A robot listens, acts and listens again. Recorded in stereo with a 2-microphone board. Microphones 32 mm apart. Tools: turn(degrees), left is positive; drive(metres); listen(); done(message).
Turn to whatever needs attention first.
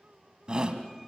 turn(degrees=-30)
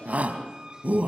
turn(degrees=-115)
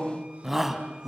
turn(degrees=-10)
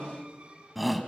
done("Facing the shout.")